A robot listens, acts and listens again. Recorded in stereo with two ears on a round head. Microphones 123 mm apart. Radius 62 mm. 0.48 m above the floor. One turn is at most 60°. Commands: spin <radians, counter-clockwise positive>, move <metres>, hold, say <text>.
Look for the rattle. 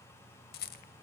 spin 1.05
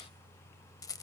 spin 0.44
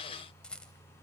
say Found it: a rattle, straight ahead, under 1 m away.